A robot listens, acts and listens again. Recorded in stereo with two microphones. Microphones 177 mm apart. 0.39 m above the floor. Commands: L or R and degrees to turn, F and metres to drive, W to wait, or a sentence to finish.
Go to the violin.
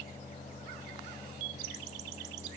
W
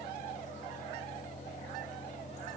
W
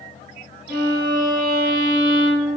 L30
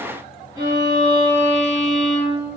R25
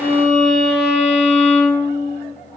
F1.0
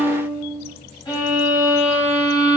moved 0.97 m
L20
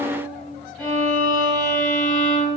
F1.0
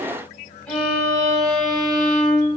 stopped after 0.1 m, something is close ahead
I am next to the violin.